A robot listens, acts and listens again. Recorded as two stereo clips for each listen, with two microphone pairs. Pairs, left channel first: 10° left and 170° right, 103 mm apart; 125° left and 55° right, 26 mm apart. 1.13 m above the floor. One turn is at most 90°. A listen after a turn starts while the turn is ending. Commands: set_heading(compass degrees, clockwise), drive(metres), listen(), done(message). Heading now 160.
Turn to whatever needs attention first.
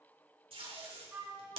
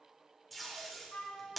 listen()
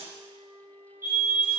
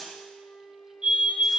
set_heading(250)
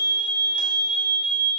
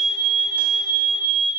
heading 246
set_heading(266)
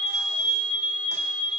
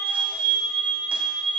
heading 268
done("Facing the fire alarm, 2 to 4 m away.")